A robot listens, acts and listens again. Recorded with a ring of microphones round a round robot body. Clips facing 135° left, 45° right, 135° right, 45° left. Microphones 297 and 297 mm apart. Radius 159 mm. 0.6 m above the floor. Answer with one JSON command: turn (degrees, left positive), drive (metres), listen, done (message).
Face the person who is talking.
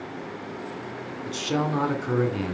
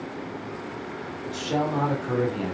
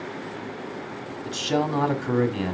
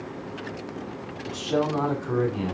{"turn": -165}
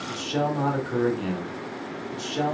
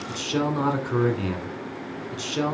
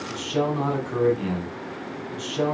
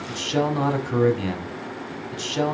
{"turn": 30}
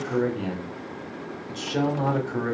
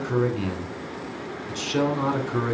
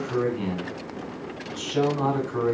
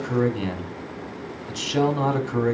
{"turn": 30}
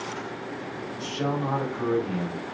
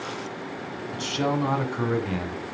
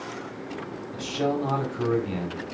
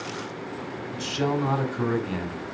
{"turn": -20}
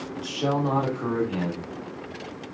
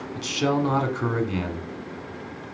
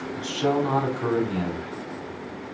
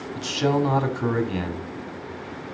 {"done": "Found it: a man speaking, straight ahead, 1 to 2 m away."}